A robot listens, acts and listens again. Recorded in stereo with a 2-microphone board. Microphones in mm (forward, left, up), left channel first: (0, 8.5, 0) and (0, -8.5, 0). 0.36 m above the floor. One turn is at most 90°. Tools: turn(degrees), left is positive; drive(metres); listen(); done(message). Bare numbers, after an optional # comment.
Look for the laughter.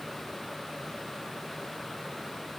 listen()
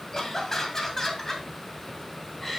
turn(30)
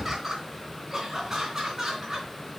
# So it is at 30° right.
turn(-30)
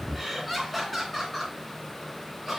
done("Found it: laughter, straight ahead.")